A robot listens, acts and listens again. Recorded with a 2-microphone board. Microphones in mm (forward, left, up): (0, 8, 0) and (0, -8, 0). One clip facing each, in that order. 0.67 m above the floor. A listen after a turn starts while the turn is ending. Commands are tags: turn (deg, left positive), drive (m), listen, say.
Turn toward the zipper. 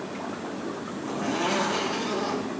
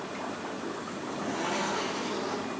<turn deg="90"/>
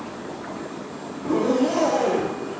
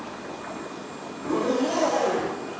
<say>Found it: a zipper, straight ahead, 2 to 4 m away.</say>